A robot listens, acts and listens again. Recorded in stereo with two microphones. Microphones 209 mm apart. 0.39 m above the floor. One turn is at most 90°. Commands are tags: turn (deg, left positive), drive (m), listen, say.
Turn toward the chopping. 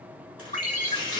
<turn deg="90"/>
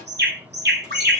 <listen/>
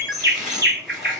<say>Found it: chopping, straight ahead, 2 to 4 m away.</say>